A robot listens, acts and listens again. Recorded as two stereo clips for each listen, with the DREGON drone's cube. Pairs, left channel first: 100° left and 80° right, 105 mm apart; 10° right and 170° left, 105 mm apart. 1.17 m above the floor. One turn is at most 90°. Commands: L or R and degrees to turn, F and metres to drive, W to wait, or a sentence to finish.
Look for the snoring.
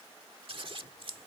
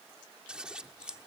W
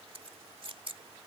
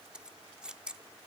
W
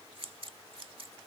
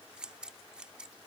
I can't make out snoring to turn to.